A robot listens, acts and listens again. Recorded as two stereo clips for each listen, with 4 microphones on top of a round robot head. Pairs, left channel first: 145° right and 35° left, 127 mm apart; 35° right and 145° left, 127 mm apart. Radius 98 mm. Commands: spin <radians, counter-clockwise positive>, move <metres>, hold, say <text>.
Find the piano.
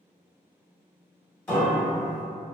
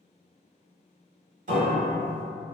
spin 2.44
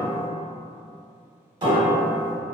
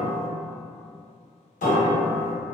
spin -0.35
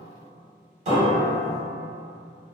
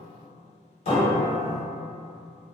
say Found it: a piano, straight ahead, 1 to 2 m away.